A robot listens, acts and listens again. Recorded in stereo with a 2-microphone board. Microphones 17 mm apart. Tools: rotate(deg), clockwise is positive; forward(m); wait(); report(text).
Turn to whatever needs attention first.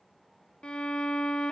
wait()
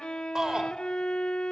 rotate(40)
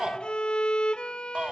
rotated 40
rotate(100)
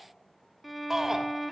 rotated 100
rotate(30)
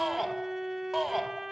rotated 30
rotate(10)
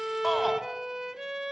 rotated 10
report("Facing the shout, 2 to 4 m away.")